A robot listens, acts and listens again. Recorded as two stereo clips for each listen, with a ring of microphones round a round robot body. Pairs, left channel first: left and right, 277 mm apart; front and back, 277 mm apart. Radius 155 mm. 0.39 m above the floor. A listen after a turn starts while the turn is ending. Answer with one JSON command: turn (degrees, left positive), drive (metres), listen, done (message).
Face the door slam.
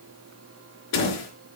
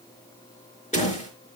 {"turn": 65}
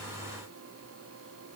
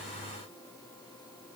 {"done": "Facing where the door slam came from. I can't hear it now."}